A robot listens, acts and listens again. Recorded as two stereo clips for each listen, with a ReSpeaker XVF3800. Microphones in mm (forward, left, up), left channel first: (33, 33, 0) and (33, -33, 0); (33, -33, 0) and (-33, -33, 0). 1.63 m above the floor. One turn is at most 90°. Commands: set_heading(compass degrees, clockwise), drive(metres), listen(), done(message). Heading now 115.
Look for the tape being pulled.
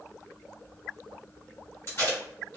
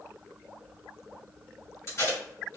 set_heading(75)
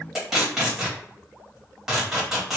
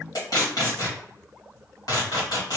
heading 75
done("Facing the tape being pulled.")